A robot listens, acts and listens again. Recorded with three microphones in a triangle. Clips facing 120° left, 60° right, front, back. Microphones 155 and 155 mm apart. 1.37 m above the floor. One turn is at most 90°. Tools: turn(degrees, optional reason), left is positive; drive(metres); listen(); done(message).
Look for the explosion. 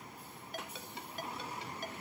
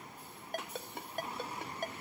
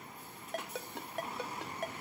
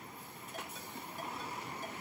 listen()
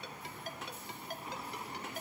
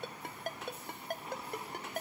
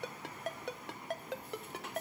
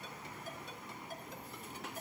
listen()
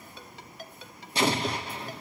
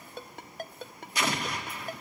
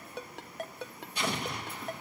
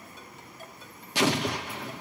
turn(degrees=90, reason="The explosion: straight behind.")
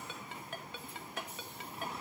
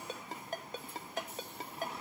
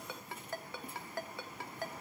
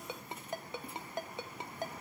turn(degrees=90, reason="Nothing new. It was at 90° left.")
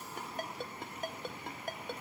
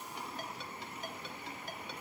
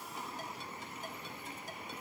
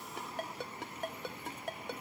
done("Facing where the explosion came from. I can't hear it now.")